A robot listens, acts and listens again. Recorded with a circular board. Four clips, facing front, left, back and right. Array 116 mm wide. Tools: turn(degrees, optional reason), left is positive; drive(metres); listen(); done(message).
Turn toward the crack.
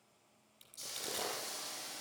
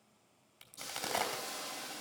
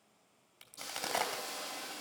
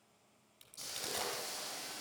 turn(degrees=155, reason="The crack: 155° left.")
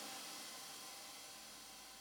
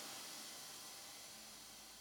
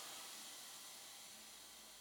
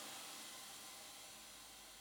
done("Facing where the crack came from. I can't hear it now.")